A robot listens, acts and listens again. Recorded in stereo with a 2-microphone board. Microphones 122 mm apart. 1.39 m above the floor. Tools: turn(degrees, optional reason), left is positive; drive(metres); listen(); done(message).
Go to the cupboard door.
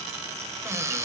turn(degrees=-25, reason="The cupboard door: about 25° right or 155° right.")
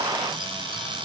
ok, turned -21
listen()
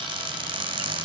turn(degrees=-135, reason="So it is at 135° right.")
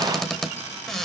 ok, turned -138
drive(metres=1.0)
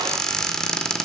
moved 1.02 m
drive(metres=1.0)
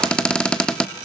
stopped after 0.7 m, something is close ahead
turn(degrees=10, reason="The cupboard door is now 10° left.")
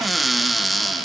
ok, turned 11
done("I am next to the cupboard door.")